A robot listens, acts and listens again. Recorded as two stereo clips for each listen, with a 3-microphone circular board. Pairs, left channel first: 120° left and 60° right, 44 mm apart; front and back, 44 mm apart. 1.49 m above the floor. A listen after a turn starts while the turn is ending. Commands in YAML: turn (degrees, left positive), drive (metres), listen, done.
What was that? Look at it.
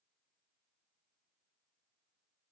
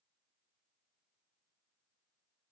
listen: true
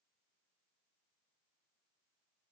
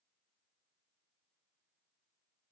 listen: true
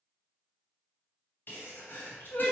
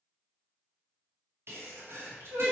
turn: 160
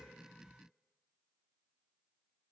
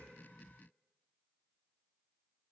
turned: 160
done: "Facing where the sneeze came from. I can't hear it now."